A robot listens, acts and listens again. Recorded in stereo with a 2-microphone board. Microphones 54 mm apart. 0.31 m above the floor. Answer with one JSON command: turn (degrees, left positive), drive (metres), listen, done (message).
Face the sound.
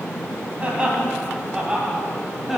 {"turn": -30}
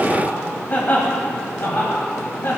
{"turn": 50}
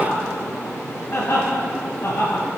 {"turn": 40}
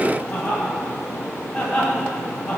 {"done": "Found it: laughter, straight ahead."}